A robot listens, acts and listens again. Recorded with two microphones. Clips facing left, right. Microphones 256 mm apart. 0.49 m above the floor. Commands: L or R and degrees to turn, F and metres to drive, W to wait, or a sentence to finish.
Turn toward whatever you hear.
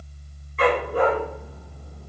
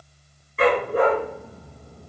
R30
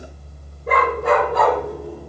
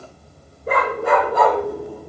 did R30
Found it: a dog barking, straight ahead.